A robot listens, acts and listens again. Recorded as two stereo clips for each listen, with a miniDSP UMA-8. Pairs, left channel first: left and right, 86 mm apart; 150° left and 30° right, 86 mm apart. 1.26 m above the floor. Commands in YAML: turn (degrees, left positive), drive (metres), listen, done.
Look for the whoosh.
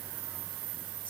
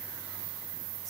listen: true
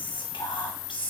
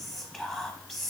listen: true
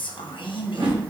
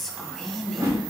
turn: -85
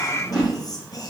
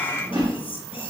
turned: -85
turn: -10
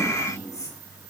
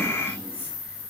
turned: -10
listen: true
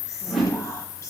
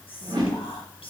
done: "Found it: a whoosh, straight ahead."